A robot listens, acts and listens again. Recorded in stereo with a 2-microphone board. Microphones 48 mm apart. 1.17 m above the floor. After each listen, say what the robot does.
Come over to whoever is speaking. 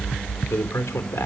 Turn 70° left.
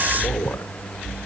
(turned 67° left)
Turn 45° left.
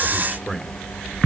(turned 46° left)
Drive 1.0 m forward.
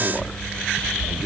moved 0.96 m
Turn 10° right.
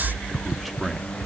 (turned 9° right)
Drive 1.0 m forward.
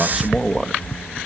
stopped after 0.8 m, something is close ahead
I am next to the man speaking.